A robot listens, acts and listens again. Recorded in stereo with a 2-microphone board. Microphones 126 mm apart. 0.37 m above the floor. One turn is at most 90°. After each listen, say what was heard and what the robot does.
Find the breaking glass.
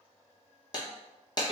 The breaking glass: about 30° left or 150° left. Turn 30° left.
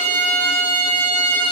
Keep listening.
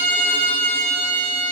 I heard breaking glass, but can't make it out now. It was about straight ahead or 120° left.